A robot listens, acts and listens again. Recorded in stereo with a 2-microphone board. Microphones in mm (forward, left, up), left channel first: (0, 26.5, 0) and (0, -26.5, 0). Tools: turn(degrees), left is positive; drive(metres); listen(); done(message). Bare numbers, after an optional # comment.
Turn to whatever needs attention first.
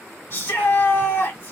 # The shout: about 55° left or 125° left.
turn(55)
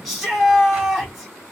done("Facing the shout.")